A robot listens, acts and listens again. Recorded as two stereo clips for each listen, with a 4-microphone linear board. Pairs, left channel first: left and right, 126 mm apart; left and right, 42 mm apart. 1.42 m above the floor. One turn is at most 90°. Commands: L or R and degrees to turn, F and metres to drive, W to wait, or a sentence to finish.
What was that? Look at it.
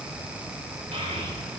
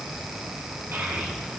R65
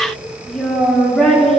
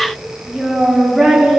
Found it: a child speaking, straight ahead.